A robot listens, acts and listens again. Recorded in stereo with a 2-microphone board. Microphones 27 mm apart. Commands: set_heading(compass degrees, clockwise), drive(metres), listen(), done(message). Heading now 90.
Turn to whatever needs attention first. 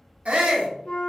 set_heading(145)
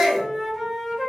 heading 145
set_heading(160)
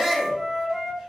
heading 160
done("Found it: a shout, straight ahead.")